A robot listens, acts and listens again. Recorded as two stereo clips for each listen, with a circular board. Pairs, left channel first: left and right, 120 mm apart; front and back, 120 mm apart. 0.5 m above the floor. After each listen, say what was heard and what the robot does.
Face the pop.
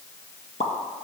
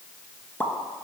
The pop: 75° left. Turn 75° left.
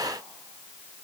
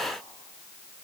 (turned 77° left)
I heard a pop from this way, but can't make it out now.